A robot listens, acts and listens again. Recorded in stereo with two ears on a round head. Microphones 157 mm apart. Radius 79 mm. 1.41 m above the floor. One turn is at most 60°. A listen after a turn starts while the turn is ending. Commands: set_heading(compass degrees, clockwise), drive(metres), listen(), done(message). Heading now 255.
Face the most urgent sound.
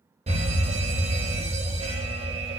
set_heading(290)
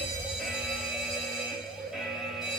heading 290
done("Facing the fire alarm.")